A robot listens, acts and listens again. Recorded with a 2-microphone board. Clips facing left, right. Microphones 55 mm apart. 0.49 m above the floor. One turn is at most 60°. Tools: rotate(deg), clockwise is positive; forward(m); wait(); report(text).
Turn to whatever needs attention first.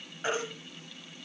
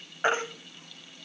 rotate(40)
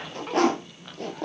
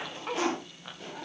wait()
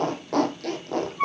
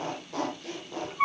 report("Facing the baby crying.")